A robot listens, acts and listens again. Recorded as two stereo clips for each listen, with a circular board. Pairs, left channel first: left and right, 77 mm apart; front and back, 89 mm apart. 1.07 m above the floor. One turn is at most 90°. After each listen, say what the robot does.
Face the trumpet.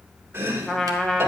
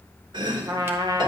Turn 90° left.
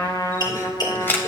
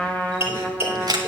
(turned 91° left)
Turn 70° left.
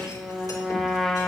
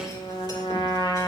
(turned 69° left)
Facing the trumpet, 1 to 2 m away.